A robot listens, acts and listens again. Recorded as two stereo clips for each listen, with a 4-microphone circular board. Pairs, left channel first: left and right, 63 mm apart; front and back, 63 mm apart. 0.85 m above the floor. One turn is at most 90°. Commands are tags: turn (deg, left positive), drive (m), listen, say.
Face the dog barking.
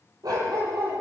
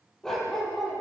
<turn deg="-85"/>
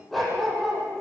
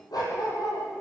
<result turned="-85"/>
<say>Found it: a dog barking, straight ahead.</say>